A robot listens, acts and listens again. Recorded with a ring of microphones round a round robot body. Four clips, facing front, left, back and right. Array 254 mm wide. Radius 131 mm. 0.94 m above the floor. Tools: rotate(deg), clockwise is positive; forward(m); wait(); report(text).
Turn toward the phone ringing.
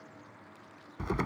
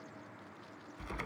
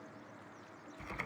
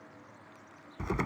wait()
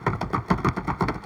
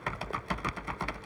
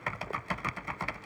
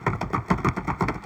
wait()
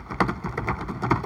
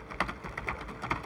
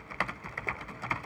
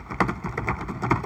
report("I can't make out a phone ringing to turn to.")